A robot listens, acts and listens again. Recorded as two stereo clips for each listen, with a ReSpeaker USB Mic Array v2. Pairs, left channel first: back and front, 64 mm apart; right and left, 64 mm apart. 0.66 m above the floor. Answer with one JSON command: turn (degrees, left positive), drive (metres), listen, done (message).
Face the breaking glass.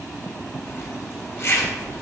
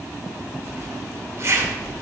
{"listen": true}
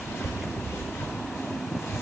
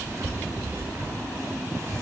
{"listen": true}
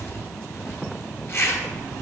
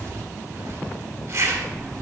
{"done": "I can't make out breaking glass, only a zipper."}